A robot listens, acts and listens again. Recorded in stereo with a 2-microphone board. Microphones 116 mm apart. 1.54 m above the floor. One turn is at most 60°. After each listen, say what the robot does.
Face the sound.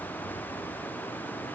Keep listening.
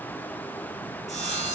Turn 60° left.
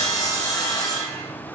Turn 30° left.
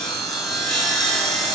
Found it: sawing, straight ahead, 2 to 4 m away.